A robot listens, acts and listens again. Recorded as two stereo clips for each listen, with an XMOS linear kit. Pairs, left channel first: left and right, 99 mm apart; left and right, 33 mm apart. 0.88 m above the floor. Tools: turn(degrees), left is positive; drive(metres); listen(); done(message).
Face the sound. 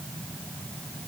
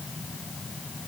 listen()
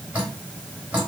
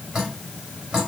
turn(degrees=-30)
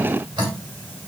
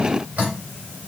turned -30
turn(degrees=-135)
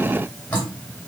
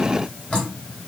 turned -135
turn(degrees=20)
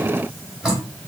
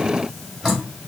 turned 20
done("Facing the dripping, 2 to 4 m away.")